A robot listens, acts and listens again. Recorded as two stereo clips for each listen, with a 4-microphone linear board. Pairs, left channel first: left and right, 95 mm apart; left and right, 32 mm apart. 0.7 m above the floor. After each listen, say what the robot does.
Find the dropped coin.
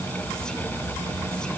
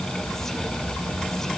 Keep listening.
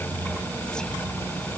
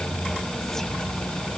Keep listening.
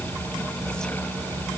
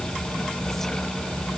I can't make out a dropped coin to turn to.